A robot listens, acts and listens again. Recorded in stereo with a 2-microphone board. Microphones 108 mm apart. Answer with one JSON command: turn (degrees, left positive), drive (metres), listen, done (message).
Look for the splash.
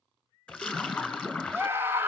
{"turn": 30}
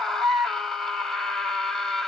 {"listen": true}
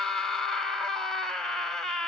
{"done": "I heard a splash, but can't make it out now. It was about 20° right or 140° left."}